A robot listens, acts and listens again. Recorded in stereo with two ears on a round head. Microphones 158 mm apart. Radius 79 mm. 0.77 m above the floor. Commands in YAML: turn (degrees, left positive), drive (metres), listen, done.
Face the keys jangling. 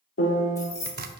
turn: 20
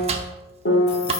listen: true
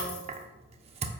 listen: true
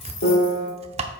done: "I heard keys jangling, but can't make it out now. It was about straight ahead or 140° left."